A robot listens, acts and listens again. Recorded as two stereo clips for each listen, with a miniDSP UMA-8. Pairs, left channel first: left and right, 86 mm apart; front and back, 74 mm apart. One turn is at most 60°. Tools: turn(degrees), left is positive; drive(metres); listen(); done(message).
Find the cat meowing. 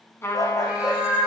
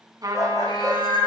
turn(degrees=-10)
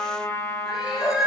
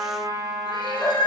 done("Found it: a cat meowing, straight ahead, over 4 m away.")